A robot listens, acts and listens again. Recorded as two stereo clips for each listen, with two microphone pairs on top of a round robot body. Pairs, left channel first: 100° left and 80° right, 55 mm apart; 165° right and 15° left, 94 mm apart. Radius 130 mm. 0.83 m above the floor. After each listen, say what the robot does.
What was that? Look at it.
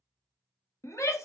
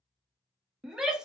Turn 95° left.
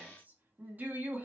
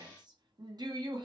Turn 20° right.
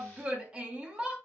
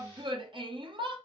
Facing the shout, 1 to 2 m away.